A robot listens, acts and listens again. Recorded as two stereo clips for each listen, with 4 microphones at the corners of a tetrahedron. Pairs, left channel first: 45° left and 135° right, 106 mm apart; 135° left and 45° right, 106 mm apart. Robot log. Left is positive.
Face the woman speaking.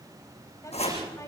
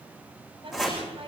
note: The woman speaking: 15° right.
cmd yaw -15
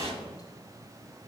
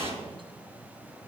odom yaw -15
cmd idle
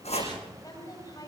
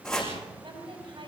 note: The woman speaking is now 10° right.
cmd yaw -10
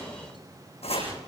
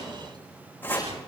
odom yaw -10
cmd idle
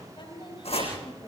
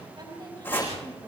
end: Facing the woman speaking, over 4 m away.